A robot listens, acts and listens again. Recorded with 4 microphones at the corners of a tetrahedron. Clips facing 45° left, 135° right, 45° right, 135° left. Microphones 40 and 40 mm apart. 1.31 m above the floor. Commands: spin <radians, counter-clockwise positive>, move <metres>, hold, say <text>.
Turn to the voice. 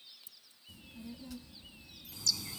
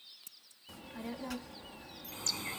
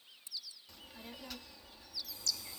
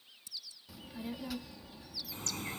spin -2.44
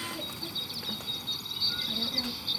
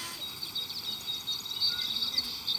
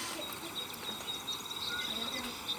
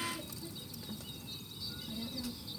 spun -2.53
say Found it: a child speaking, straight ahead.